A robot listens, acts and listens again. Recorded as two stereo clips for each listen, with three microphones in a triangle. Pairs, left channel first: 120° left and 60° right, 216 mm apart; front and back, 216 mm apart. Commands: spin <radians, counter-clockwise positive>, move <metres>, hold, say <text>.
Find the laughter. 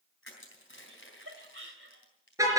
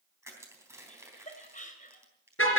spin -0.87
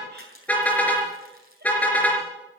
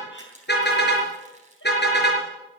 hold
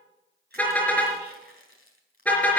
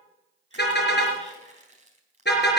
hold
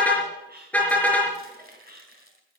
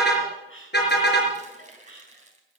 spin -0.26
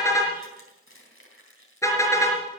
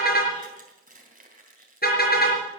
hold
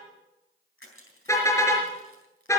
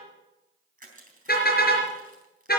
hold
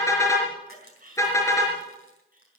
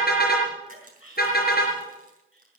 spin -0.17
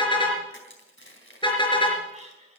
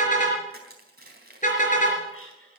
say Found it: laughter, straight ahead, over 4 m away.